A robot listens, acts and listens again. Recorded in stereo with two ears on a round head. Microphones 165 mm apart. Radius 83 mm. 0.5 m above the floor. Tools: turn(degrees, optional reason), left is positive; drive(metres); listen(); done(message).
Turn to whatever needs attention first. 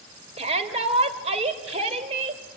turn(degrees=-35, reason="The shout: about 35° right or 145° right.")
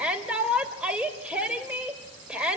done("Facing the shout, 2 to 4 m away.")